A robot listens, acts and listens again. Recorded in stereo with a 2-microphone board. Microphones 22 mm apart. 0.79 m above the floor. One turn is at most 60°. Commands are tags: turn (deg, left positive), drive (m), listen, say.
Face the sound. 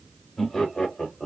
<turn deg="25"/>
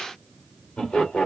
<turn deg="60"/>
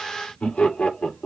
<turn deg="60"/>
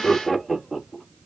<say>Facing the laughter.</say>